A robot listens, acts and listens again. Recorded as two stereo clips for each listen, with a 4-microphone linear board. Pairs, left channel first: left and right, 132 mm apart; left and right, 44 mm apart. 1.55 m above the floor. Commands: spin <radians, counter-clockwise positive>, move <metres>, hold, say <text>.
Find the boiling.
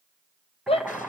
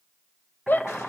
spin -0.52
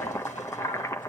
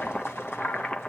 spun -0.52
spin 0.44
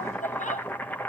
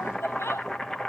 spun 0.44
spin 0.26
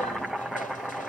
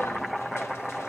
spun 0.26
say Found it: boiling, straight ahead.